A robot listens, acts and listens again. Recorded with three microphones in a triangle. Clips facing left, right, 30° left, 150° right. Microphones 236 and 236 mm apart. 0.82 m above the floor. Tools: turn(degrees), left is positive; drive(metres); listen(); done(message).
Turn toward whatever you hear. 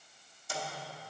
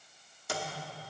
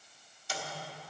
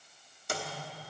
turn(degrees=-110)
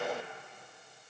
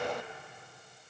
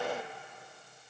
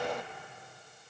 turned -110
listen()
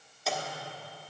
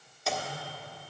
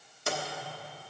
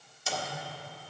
done("Found it: a microwave, straight ahead.")